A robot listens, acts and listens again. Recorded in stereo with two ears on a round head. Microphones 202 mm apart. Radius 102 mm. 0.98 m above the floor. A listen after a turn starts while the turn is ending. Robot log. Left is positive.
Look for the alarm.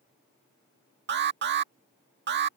note: The alarm: about 55° right or 125° right.
cmd yaw -55
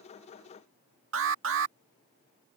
note: So it is at 70° right.
cmd yaw -70
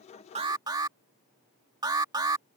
note: The alarm is now 20° right.
cmd yaw -20
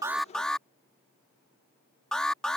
end: Facing the alarm.